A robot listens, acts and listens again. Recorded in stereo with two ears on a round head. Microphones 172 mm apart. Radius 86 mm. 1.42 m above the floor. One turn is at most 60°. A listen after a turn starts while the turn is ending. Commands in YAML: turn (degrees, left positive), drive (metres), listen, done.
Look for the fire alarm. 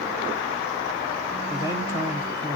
listen: true
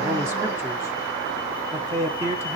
listen: true
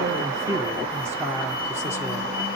done: "I can't make out a fire alarm, only a man speaking."